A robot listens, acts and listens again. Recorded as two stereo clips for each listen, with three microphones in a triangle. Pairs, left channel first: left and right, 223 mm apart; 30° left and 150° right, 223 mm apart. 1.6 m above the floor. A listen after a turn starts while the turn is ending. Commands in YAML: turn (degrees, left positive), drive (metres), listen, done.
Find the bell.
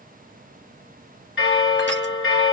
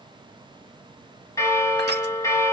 turn: 105
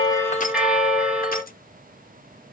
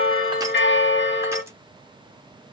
done: "Facing the bell, 1 to 2 m away."